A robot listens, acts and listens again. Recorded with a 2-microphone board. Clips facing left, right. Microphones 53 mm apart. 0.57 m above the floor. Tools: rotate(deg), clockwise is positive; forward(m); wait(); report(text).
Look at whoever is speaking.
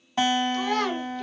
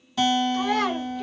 rotate(30)
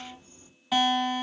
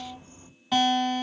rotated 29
wait()
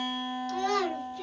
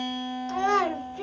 rotate(140)
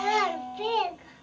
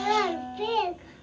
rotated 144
report("Found it: a child speaking, straight ahead, 1 to 2 m away.")